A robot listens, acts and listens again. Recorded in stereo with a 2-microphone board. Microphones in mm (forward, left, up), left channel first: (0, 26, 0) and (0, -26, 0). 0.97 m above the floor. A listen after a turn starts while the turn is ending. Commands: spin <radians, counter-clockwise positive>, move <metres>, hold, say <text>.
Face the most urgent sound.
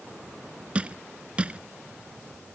hold
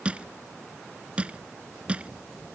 hold
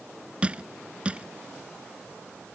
say I can't make out anything urgent, only crushing.